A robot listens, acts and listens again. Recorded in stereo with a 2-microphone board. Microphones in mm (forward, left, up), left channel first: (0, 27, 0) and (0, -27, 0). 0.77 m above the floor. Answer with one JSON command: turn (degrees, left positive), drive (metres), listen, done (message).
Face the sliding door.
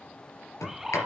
{"turn": 70}
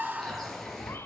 {"done": "Facing the sliding door, 2 to 4 m away."}